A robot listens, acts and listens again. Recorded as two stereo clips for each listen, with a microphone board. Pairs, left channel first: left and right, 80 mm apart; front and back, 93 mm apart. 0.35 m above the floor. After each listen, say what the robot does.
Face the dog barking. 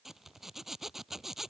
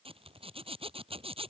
Keep listening.
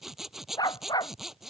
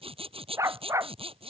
Turn 120° left.
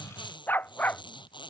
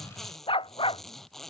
Turn 20° left.
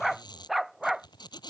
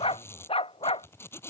Found it: a dog barking, straight ahead.